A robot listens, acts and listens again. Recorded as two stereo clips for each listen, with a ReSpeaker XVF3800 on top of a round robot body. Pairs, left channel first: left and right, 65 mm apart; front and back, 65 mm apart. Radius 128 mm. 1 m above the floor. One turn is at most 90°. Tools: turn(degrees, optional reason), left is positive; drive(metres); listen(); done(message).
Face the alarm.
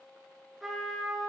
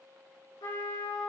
listen()
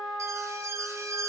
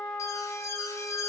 turn(degrees=-45, reason="The alarm: 45° right.")
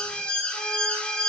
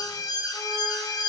turn(degrees=15, reason="The alarm is now 15° left.")
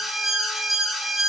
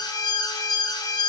done("Facing the alarm, 1 to 2 m away.")